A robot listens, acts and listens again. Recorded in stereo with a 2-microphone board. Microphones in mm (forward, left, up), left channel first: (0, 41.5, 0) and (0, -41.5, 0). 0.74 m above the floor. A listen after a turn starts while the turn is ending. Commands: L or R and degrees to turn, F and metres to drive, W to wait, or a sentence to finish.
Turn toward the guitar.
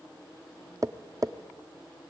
W
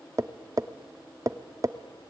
W
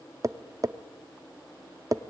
I can't make out a guitar, only tapping.